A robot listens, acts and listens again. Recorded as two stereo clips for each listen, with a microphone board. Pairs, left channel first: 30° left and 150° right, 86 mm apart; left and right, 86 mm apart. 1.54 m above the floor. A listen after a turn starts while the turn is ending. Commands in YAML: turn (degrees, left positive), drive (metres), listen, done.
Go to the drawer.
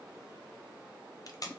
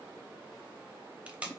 listen: true
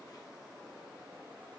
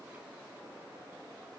listen: true
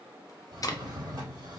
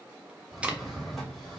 turn: -175
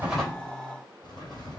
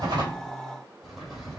drive: 1.0
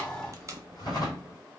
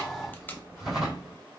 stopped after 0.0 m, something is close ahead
done: "Something is in my way. I am facing the drawer but have not reached it."